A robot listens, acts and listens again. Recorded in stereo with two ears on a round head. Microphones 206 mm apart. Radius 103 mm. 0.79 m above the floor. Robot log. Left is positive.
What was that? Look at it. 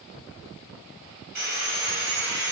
note: The sawing: about 55° right or 125° right.
cmd yaw -55
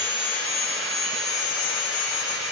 end: Found it: sawing, straight ahead.